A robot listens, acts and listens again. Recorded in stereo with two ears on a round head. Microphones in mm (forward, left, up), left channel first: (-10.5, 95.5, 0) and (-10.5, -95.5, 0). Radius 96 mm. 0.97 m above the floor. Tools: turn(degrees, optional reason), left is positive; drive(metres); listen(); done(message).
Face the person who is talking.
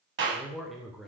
turn(degrees=30)
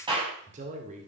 turn(degrees=-35, reason="So it is at 35° right.")
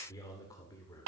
turn(degrees=15, reason="The man speaking is now 15° left.")
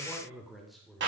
done("Found it: a man speaking, straight ahead.")